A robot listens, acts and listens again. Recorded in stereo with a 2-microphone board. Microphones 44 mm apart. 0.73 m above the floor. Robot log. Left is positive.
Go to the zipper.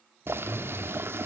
note: The zipper: about 40° left or 140° left.
cmd yaw +40
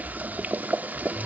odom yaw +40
note: So it is at 95° left.
cmd yaw +95
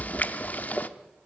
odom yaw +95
note: The zipper is now 10° left.
cmd yaw +10
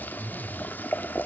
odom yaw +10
cmd fwd 1.0
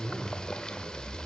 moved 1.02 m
cmd fwd 1.0
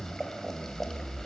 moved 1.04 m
note: The zipper is now 20° left.
cmd yaw +20
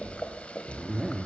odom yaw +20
cmd fwd 1.0
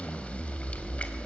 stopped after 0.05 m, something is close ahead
end: Arrived at the zipper, straight ahead.